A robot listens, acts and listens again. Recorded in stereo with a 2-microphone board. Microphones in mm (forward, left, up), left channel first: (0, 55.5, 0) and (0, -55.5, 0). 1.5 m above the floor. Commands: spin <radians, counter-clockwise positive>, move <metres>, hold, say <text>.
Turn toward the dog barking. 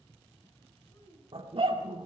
spin -1.05
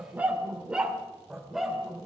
say Facing the dog barking, 2 to 4 m away.